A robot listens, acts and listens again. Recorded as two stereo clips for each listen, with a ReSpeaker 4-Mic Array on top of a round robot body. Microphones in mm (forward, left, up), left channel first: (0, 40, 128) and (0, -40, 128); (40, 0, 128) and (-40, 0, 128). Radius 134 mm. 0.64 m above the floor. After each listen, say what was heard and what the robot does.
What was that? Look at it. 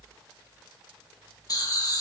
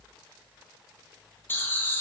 The laughter: 60° left. Turn 60° left.
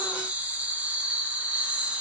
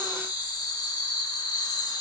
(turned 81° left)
The laughter is now 20° right. Turn 20° right.
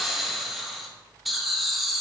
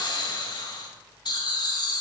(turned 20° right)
Found it: laughter, straight ahead, 1 to 2 m away.